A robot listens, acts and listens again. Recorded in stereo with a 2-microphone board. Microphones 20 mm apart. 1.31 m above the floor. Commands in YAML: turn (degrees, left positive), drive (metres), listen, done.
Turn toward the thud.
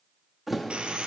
turn: -30
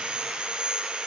listen: true
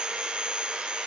done: "I heard a thud, but can't make it out now. It was about 25° left or 145° right."